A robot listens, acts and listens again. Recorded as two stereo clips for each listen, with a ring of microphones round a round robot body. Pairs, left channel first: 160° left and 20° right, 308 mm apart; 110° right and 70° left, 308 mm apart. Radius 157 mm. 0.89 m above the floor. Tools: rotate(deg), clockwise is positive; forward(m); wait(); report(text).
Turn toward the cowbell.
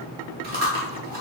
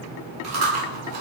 wait()
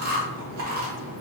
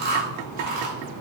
wait()
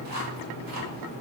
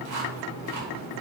report("I can't make out a cowbell, only chewing.")